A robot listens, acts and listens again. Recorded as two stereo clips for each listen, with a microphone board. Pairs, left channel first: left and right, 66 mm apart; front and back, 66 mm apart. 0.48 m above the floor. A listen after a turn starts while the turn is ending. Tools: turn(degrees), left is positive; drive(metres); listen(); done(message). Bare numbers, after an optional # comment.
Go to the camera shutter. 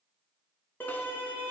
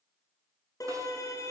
listen()
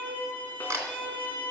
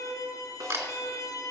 # The camera shutter: 140° right.
turn(-140)
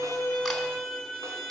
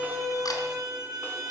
drive(1.0)
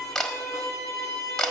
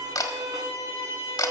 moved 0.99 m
# The camera shutter is now 10° left.
turn(10)
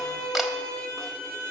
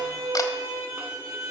listen()
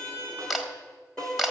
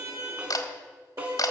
drive(1.0)
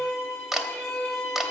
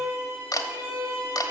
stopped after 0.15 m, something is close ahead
done("Arrived at the camera shutter, straight ahead.")